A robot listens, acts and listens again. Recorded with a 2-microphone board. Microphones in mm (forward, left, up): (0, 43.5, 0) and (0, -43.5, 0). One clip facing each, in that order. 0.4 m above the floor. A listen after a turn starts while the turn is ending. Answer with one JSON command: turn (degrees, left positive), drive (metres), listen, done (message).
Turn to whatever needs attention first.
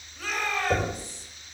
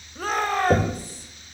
{"turn": -50}
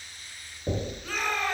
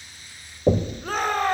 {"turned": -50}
{"turn": -70}
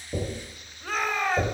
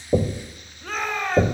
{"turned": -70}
{"done": "Found it: a shout, straight ahead."}